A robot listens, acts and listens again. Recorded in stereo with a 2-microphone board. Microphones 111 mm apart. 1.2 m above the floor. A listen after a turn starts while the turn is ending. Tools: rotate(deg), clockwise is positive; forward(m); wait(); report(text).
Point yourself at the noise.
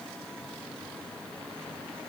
wait()
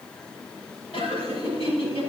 rotate(-60)
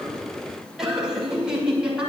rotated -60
rotate(10)
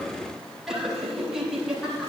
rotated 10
report("Found it: laughter, straight ahead, over 4 m away.")